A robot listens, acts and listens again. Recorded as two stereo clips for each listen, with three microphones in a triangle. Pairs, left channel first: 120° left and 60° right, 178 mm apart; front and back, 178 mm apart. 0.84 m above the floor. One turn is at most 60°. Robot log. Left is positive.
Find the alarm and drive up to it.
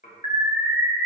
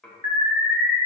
cmd fwd 1.0
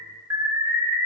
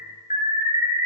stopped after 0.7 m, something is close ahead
end: I am next to the alarm.